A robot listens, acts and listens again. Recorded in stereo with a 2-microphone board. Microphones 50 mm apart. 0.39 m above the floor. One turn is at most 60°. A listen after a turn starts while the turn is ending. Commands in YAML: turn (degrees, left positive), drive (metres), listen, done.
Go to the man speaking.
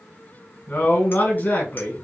turn: 40
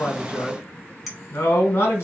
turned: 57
turn: 60
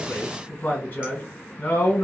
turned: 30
turn: 45
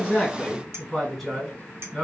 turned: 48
drive: 1.0
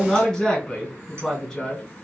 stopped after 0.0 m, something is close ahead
done: "Blocked. The man speaking is further on, straight ahead."